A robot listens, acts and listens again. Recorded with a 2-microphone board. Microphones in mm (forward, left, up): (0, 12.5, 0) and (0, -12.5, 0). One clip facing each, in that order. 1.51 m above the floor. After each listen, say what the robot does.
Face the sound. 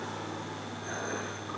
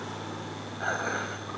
Turn 90° right.
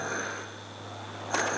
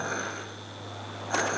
Found it: dishes clattering, straight ahead, over 4 m away.